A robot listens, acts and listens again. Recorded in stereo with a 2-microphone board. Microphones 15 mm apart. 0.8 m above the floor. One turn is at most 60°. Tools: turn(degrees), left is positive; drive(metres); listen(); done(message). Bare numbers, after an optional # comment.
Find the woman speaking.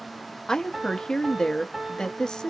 # The woman speaking: about 65° left or 115° left.
turn(60)
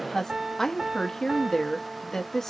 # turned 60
# So it is at 45° left.
turn(45)
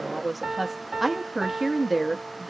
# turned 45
done("Found it: a woman speaking, straight ahead.")